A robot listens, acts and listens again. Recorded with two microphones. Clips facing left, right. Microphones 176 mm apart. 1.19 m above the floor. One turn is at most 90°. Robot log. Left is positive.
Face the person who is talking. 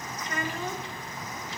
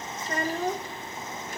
note: The child speaking: about 40° right or 140° right.
cmd yaw -40
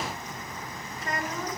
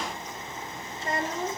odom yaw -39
note: So it is at 30° right.
cmd yaw -30
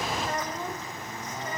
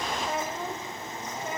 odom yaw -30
note: The child speaking is now 10° right.
cmd yaw -10
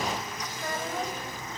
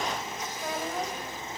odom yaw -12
end: Found it: a child speaking, straight ahead.